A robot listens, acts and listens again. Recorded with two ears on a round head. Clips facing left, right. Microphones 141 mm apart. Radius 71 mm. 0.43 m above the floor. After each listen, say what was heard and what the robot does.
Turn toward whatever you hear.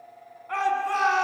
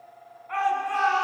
The shout: about 55° left or 125° left. Turn 55° left.
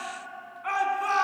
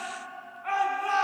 So it is at 70° left. Turn 70° left.
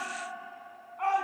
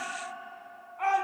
Facing the shout.